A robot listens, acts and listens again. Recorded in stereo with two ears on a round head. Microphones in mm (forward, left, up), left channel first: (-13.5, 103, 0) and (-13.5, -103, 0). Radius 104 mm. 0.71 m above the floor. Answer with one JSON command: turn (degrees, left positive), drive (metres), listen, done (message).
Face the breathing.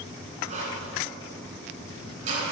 {"turn": -30}
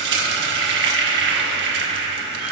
{"listen": true}
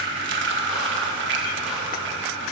{"listen": true}
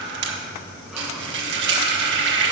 {"done": "I heard breathing, but can't make it out now. It was about straight ahead or 120° right."}